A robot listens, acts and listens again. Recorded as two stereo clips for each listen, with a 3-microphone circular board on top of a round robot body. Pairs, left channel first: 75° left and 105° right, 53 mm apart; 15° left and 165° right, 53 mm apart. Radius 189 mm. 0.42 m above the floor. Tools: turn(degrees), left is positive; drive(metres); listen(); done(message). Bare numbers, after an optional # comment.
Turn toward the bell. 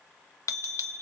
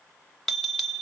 # The bell: 100° left.
turn(100)
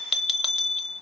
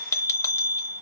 # The bell is now 15° right.
turn(-15)
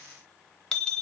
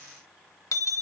done("Found it: a bell, straight ahead.")